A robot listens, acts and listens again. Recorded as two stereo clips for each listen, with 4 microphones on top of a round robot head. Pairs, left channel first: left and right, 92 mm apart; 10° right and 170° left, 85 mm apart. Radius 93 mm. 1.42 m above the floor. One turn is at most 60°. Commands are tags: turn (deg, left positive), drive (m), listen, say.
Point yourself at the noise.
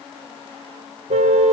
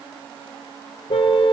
<turn deg="-60"/>
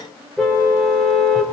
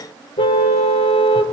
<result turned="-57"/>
<say>Found it: a car horn, straight ahead, 2 to 4 m away.</say>